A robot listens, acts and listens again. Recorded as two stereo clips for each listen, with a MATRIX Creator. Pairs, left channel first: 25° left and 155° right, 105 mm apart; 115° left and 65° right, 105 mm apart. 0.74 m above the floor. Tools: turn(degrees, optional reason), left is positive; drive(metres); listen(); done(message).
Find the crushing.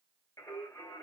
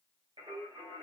listen()
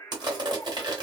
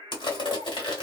turn(degrees=155, reason="The crushing: 155° left.")
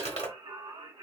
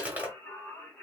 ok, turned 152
done("Facing the crushing, 1 to 2 m away.")